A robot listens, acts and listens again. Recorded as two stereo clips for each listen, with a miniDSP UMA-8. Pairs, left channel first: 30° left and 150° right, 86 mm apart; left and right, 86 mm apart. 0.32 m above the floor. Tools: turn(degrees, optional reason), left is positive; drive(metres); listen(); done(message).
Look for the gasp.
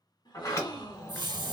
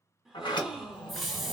done("Facing the gasp.")